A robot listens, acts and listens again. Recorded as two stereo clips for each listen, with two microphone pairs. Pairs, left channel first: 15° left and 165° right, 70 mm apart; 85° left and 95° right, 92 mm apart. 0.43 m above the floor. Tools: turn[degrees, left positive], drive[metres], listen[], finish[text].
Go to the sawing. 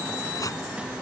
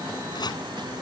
Action: listen[]
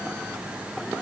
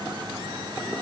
Action: listen[]
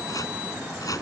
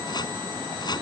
Action: finish[I can't make out sawing to turn to.]